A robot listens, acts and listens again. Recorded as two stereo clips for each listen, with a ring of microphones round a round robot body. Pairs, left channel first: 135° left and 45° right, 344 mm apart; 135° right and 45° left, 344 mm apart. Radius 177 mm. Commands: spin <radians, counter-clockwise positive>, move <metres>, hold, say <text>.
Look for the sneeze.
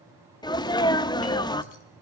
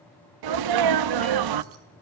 spin 0.96
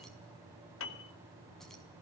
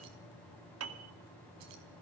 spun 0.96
say I heard a sneeze from this way, but can't make it out now.